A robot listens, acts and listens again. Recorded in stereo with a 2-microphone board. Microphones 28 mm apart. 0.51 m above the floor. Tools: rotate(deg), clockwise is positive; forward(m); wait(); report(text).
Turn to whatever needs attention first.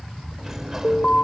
rotate(-45)
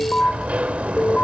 rotate(-80)
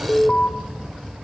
rotate(-35)
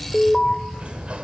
rotate(-15)
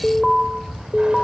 report("Facing the alarm.")